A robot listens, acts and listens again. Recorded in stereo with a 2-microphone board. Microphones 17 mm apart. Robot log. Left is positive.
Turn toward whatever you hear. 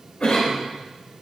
note: The cough: about 75° left or 105° left.
cmd yaw +75
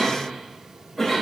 end: Facing the cough.